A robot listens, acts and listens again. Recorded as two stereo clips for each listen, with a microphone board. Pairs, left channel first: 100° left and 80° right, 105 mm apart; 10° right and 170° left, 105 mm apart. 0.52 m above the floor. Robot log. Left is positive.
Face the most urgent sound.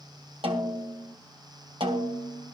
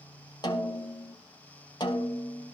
cmd idle
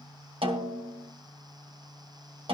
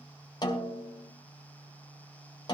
cmd idle
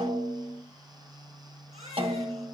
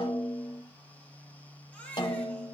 note: The baby crying: 90° right.
cmd yaw -90
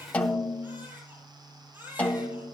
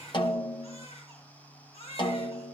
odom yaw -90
note: The baby crying is now 10° right.
cmd yaw -10
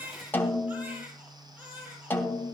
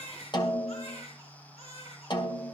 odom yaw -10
end: Found it: a baby crying, straight ahead.